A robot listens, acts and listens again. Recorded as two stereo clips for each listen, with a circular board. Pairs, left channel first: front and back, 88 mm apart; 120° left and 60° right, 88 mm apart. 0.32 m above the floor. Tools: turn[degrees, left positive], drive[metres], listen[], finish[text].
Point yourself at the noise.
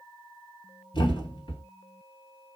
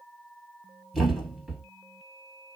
Thought: The thud: 25° left.
Action: turn[25]
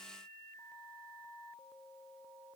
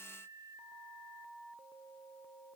Action: finish[I heard a thud from this way, but can't make it out now.]